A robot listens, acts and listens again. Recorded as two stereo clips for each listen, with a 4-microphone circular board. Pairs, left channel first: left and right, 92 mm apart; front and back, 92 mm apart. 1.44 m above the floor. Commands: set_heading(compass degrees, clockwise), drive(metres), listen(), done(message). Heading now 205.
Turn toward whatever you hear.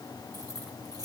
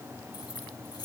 set_heading(250)
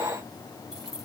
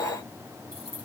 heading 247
done("Found it: keys jangling, straight ahead.")